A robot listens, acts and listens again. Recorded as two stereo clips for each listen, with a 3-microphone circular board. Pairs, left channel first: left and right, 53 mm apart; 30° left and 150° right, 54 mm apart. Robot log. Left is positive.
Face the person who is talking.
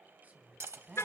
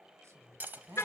note: The woman speaking: 145° right.
cmd yaw -145
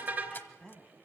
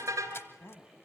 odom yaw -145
note: The woman speaking is now 10° left.
cmd yaw +10
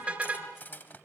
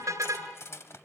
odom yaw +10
cmd idle
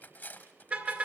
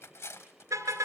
cmd idle
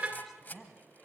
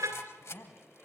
end: Found it: a woman speaking, straight ahead, 2 to 4 m away.